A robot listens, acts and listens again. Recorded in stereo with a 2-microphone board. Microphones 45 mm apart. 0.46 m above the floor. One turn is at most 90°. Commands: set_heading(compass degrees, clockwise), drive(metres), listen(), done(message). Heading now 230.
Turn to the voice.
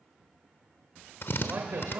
set_heading(280)
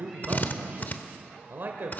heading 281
set_heading(341)
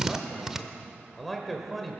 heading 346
done("Facing the man speaking.")